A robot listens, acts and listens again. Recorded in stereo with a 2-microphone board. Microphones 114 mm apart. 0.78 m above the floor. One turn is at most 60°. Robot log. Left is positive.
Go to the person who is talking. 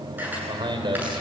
note: The man speaking: about 45° right or 135° right.
cmd yaw -45
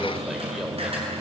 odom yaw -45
cmd idle
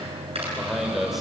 cmd fwd 1.0
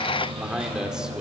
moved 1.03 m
cmd fwd 1.0
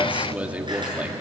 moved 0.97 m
note: The man speaking is now 15° right.
cmd yaw -15
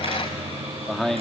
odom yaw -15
cmd fwd 1.0
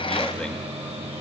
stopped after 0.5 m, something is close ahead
cmd idle
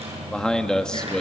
note: The man speaking is now 10° left.
cmd yaw +10
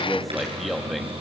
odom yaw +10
end: I am next to the man speaking.